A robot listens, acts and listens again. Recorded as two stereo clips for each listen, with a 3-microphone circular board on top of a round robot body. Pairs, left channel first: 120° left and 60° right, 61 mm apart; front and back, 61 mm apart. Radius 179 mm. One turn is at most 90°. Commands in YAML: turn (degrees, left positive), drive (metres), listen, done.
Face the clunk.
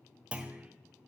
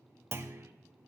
turn: -90
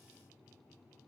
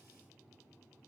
turn: -45
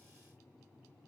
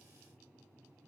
done: "I heard a clunk from this way, but can't make it out now."